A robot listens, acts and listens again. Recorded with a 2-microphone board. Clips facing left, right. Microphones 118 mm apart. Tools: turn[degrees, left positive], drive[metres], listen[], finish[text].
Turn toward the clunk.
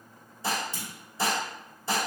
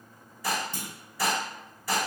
Thought: The clunk: about 50° right or 130° right.
Action: turn[-50]
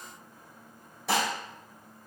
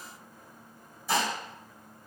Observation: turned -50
Action: listen[]
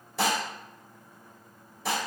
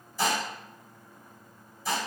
Action: finish[I heard a clunk, but can't make it out now. It was about straight ahead or 80° right.]